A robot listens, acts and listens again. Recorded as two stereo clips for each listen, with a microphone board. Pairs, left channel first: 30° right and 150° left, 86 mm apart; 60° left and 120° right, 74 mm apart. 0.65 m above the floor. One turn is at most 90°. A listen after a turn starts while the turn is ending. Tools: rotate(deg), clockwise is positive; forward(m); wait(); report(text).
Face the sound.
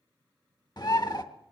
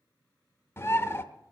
report("Facing the bird, 1 to 2 m away.")